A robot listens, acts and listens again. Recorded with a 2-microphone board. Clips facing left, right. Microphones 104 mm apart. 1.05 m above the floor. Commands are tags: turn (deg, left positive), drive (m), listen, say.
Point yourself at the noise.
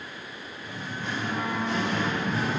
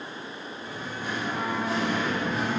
<turn deg="30"/>
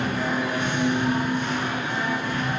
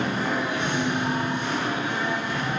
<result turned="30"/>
<turn deg="-15"/>
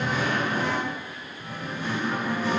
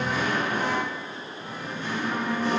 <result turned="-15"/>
<turn deg="10"/>
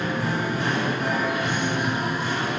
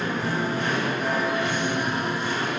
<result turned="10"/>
<say>Facing the singing, 2 to 4 m away.</say>